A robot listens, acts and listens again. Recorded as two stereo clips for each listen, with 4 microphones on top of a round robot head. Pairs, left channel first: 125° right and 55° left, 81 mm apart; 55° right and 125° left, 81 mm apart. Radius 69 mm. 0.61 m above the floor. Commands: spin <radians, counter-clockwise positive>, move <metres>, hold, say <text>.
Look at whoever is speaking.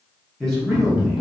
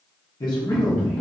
spin -0.70
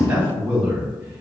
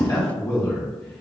spin -0.35
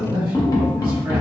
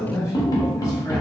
say Facing the man speaking.